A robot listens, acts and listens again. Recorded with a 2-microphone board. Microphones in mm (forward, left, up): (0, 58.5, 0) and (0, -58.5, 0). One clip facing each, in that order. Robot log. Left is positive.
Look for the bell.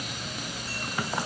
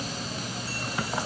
cmd idle
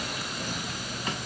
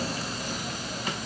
cmd idle
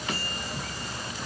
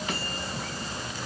end: I can't make out a bell to turn to.